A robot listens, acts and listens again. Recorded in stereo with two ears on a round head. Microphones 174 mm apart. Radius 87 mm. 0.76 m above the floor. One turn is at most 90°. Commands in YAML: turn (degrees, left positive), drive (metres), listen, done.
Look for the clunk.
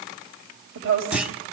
turn: -30
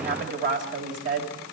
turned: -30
listen: true
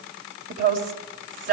done: "I heard a clunk, but can't make it out now. It was about 25° left or 145° right."